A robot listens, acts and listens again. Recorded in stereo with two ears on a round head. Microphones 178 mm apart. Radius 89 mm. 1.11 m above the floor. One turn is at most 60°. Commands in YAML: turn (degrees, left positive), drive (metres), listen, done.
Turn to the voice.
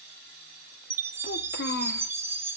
turn: 50
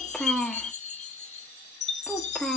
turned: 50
done: "Found it: a child speaking, straight ahead, under 1 m away."